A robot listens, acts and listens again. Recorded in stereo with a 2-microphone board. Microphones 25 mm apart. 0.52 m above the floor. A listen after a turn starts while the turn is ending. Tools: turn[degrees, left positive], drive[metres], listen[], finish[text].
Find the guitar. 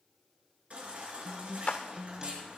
Thought: The guitar: about 20° right or 160° right.
Action: turn[-20]
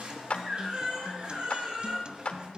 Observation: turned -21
Thought: So it is at 140° right.
Action: turn[-140]
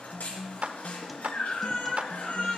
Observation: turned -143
Action: listen[]
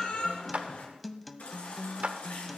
Action: finish[Found it: a guitar, straight ahead.]